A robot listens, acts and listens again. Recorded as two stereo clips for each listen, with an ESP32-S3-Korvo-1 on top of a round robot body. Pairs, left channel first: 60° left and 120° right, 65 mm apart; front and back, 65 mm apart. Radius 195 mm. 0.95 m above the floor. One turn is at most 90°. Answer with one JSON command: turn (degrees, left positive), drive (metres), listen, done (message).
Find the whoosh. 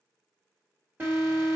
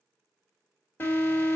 {"listen": true}
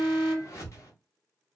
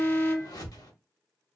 {"turn": 15}
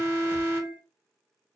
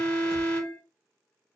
{"listen": true}
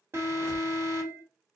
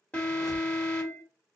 {"listen": true}
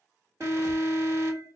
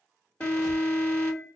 {"done": "Facing where the whoosh came from. I can't hear it now."}